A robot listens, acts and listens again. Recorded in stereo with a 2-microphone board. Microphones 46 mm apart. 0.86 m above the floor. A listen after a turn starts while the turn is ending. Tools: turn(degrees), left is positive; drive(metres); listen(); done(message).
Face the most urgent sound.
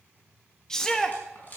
turn(degrees=30)
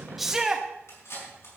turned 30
turn(degrees=-15)
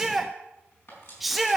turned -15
done("Facing the shout.")